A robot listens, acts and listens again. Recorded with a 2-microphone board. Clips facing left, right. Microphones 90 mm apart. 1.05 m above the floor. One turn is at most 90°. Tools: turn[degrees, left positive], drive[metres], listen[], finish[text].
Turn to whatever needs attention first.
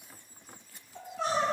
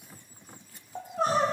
Thought: The crying: about 45° right or 135° right.
Action: turn[-45]
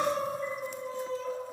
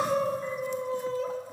Thought: So it is at 80° right.
Action: turn[-80]
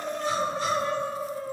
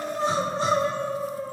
Thought: The crying is now 35° right.
Action: turn[-35]
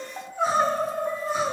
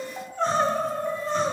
Thought: The crying is now 10° left.
Action: turn[10]
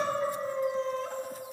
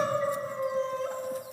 Action: finish[Found it: crying, straight ahead.]